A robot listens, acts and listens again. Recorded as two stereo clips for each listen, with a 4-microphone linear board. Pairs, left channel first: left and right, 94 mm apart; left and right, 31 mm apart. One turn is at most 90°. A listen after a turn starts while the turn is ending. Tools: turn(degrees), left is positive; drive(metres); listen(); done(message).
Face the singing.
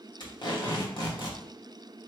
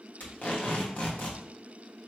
listen()
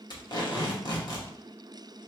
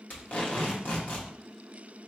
listen()
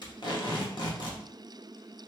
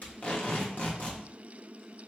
done("I can't make out singing, only tape being pulled.")